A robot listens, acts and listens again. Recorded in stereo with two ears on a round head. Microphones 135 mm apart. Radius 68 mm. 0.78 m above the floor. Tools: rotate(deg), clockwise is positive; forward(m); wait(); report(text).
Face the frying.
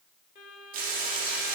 rotate(65)
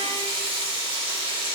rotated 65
rotate(40)
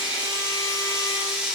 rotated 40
rotate(10)
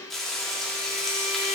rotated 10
report("Facing the frying, 1 to 2 m away.")